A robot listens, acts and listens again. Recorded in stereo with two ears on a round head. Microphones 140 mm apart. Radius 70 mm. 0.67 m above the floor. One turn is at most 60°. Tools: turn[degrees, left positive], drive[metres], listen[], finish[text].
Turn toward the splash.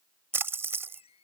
Thought: The splash: about 15° right or 165° right.
Action: turn[-15]
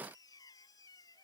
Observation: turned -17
Action: listen[]
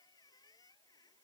Action: finish[I heard a splash, but can't make it out now. It was about straight ahead or 145° right.]